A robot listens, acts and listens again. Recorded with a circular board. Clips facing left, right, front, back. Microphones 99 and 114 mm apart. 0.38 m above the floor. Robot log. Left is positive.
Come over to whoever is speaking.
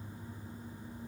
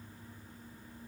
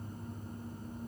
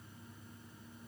cmd idle
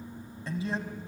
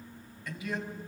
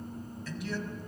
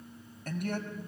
note: The man speaking: 145° left.
cmd yaw +145
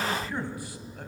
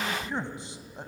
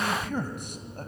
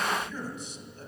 note: The man speaking is now 25° right.
cmd yaw -25
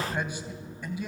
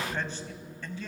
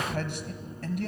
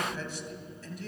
note: The man speaking is now 15° left.
cmd yaw +15
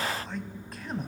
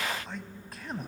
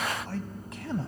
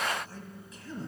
cmd fwd 1.0
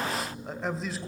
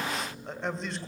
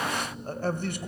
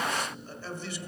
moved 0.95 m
cmd fwd 1.0
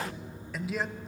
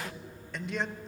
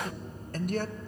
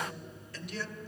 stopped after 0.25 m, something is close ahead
end: I am next to the man speaking.